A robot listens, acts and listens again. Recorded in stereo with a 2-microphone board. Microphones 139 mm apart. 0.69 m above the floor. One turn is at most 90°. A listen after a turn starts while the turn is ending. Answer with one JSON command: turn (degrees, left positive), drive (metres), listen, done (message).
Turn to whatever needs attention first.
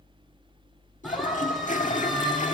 {"turn": 30}
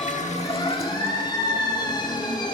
{"turn": 90}
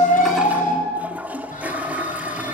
{"turn": 85}
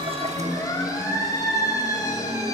{"turn": 25}
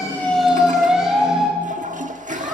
{"done": "Facing the siren, over 4 m away."}